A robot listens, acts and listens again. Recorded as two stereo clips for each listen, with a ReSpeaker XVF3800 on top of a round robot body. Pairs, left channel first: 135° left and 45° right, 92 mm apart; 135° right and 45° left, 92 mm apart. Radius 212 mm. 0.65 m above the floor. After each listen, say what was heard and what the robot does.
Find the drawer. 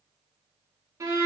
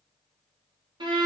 Keep listening.
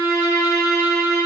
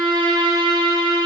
Keep listening.
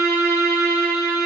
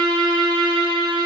I can't make out a drawer, only a violin.